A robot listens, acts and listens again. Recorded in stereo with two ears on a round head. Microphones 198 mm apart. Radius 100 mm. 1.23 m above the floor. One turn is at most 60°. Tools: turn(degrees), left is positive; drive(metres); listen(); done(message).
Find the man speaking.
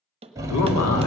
turn(degrees=60)
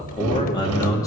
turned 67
turn(degrees=15)
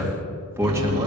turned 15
turn(degrees=-15)
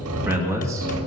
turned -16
turn(degrees=-15)
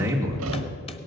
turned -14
turn(degrees=-15)
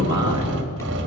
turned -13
turn(degrees=-20)
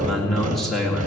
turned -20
done("Facing the man speaking, 2 to 4 m away.")